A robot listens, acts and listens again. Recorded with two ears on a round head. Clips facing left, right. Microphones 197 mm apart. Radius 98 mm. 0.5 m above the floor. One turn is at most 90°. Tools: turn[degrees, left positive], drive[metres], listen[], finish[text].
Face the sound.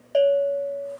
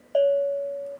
Thought: The bell: about 35° left or 145° left.
Action: turn[35]
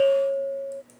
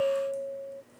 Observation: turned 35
Thought: So it is at 110° left.
Action: turn[90]
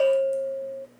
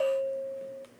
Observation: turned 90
Thought: The bell is now 65° left.
Action: turn[65]
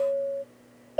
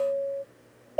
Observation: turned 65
Thought: The bell is now 15° left.
Action: turn[15]
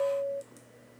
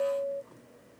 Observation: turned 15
Action: finish[Facing the bell.]